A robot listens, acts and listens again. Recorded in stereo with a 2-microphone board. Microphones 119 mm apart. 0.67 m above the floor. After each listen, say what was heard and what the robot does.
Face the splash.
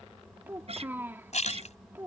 The splash: about 70° left or 110° left. Turn 70° left.
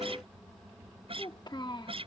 Keep listening.
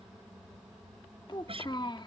I heard a splash, but can't make it out now. It was about straight ahead or 40° left.